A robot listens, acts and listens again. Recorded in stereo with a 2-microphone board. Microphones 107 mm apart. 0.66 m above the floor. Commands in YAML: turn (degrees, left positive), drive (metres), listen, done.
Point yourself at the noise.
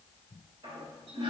turn: -55
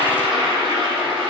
turn: -50
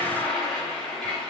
done: "Found it: a toilet flushing, straight ahead, 1 to 2 m away."